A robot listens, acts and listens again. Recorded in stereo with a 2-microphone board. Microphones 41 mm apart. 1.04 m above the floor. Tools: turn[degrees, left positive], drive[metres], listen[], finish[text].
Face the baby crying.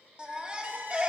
Thought: The baby crying: about 30° right or 150° right.
Action: turn[-30]
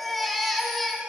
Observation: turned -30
Action: finish[Facing the baby crying, 1 to 2 m away.]